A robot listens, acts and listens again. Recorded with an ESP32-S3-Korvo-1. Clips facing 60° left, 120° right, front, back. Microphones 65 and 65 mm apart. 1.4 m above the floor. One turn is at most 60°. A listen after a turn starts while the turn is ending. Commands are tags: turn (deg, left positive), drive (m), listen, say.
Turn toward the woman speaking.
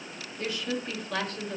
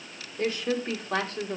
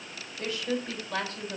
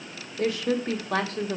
<turn deg="60"/>
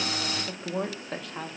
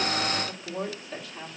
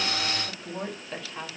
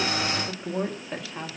<turn deg="60"/>
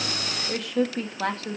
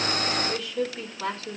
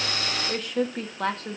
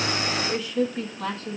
<turn deg="30"/>
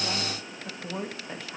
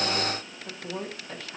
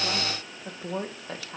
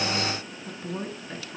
<turn deg="-15"/>
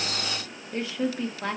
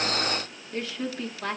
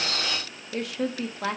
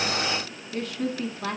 <say>Facing the woman speaking.</say>